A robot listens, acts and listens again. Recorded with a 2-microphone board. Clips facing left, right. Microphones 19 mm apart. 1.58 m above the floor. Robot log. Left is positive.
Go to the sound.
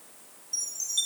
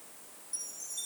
note: The chime: about 60° left or 120° left.
cmd yaw +60
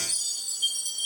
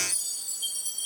note: So it is at 25° left.
cmd yaw +25
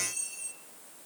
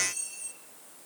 cmd fwd 1.0
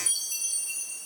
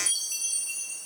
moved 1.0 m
note: The chime is now 20° right.
cmd yaw -20
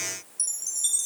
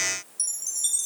cmd fwd 1.0
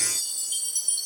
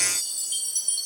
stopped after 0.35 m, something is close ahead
note: The chime is now 10° right.
cmd yaw -10
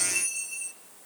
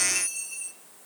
end: Arrived at the chime, straight ahead.